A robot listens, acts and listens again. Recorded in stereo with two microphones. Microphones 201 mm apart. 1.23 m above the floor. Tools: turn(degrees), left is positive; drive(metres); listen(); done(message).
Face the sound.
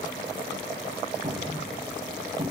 turn(degrees=-50)
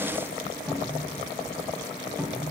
done("Facing the cupboard door.")